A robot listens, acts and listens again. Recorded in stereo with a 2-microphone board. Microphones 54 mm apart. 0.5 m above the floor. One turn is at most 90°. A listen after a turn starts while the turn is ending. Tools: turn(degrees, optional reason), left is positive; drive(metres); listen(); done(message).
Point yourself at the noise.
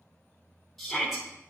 turn(degrees=30)
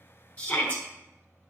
turn(degrees=90, reason="So it is at 150° left.")
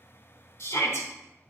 turn(degrees=60, reason="The shout is now 60° left.")
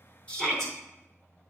turn(degrees=10, reason="The shout is now 10° left.")
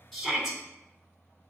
done("Found it: a shout, straight ahead.")